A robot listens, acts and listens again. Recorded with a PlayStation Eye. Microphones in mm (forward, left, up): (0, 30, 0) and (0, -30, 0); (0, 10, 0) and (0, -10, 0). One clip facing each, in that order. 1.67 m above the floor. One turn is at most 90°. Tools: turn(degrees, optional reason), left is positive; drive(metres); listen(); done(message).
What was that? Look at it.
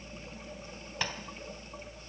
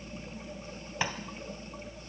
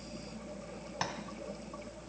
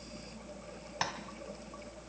turn(degrees=-30)
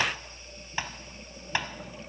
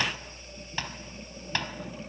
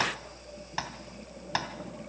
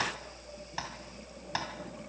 turn(degrees=15, reason="So it is at 15° left.")
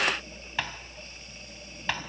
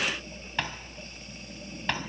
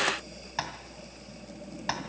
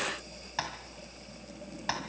done("Found it: tapping, straight ahead, 2 to 4 m away.")